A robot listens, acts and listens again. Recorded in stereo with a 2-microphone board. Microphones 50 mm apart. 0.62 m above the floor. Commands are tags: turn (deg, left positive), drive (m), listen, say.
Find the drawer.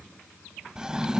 <turn deg="-30"/>
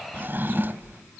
<turn deg="-135"/>
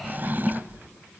<turn deg="-40"/>
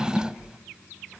<turn deg="-15"/>
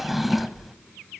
<say>Found it: a drawer, straight ahead.</say>